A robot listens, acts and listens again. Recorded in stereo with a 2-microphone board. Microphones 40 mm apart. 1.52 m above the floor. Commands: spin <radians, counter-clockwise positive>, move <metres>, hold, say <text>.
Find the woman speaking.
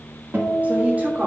spin -0.79
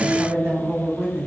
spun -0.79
spin -1.31
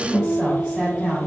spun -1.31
spin -0.35
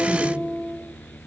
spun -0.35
hold
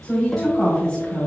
say Facing the woman speaking.